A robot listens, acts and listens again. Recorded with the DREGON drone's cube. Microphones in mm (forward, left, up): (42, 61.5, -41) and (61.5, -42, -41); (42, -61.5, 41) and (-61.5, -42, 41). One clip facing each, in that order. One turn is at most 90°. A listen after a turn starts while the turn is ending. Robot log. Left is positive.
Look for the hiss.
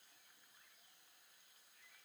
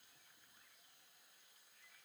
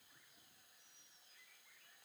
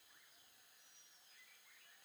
cmd idle
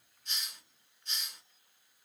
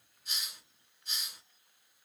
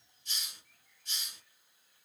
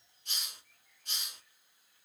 note: The hiss: 165° right.
cmd yaw -90
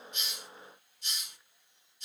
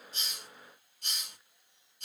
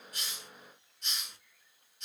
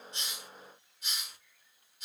note: The hiss is now 105° right.
cmd yaw -90
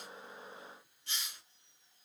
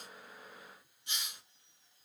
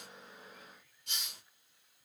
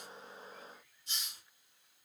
note: The hiss is now 10° right.
cmd yaw -10
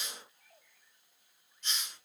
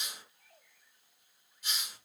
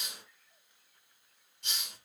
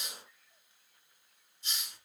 end: Facing the hiss, 1 to 2 m away.